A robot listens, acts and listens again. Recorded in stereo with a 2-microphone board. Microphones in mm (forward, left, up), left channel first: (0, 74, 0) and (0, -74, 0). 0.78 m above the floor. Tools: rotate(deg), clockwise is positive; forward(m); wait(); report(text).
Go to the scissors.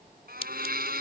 rotate(-40)
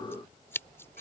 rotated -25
rotate(-15)
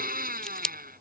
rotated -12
forward(1.0)
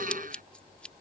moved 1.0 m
wait()
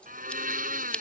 forward(1.0)
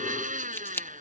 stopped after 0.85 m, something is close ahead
rotate(-20)
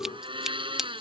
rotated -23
report("Arrived at the scissors, straight ahead.")